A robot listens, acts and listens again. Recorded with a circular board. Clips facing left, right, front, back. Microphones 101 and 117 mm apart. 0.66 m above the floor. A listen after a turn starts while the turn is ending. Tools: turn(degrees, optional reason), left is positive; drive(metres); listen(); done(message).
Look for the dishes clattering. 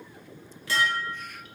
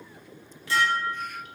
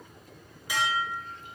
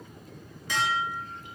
turn(degrees=80, reason="The dishes clattering: 80° left.")
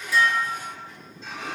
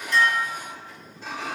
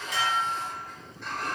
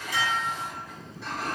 turn(degrees=-15, reason="The dishes clattering is now 15° right.")
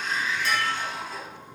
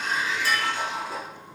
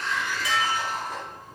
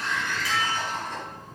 done("Facing the dishes clattering, 1 to 2 m away.")